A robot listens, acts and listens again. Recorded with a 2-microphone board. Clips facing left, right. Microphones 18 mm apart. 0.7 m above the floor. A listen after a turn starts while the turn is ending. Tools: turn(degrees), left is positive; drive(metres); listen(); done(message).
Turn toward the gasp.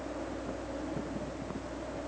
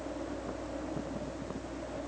listen()
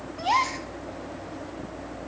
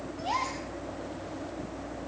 turn(degrees=35)
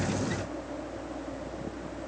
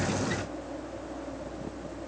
listen()
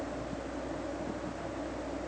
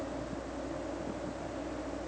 done("I heard a gasp, but can't make it out now. It was about straight ahead or 110° left.")